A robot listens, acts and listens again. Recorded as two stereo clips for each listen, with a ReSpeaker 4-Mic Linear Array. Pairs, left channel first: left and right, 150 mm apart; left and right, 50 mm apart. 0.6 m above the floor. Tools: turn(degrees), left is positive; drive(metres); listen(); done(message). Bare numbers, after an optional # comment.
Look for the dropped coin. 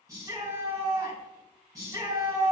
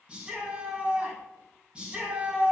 listen()
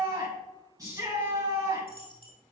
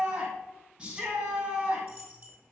# The dropped coin: about 40° right or 140° right.
turn(-40)
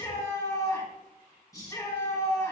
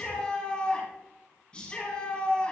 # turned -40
listen()
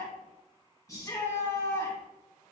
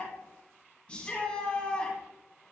done("I heard a dropped coin, but can't make it out now. It was about straight ahead or 100° right.")